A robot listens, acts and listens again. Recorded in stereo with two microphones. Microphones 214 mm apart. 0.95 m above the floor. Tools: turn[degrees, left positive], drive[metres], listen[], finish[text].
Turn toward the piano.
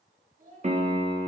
Thought: The piano: about 35° right or 145° right.
Action: turn[-35]
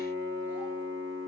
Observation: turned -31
Thought: So it is at 115° right.
Action: turn[-115]
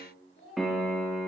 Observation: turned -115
Action: finish[Facing the piano.]